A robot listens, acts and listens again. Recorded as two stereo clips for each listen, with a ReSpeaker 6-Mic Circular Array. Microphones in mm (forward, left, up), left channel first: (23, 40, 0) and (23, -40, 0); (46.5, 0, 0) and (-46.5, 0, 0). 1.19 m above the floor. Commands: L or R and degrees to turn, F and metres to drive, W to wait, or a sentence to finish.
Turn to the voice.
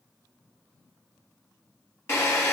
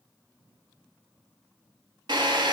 W
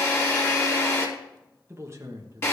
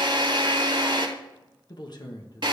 R45
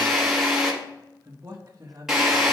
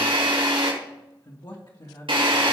R35
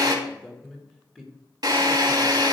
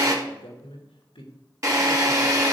L10
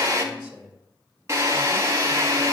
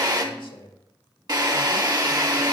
Facing the man speaking.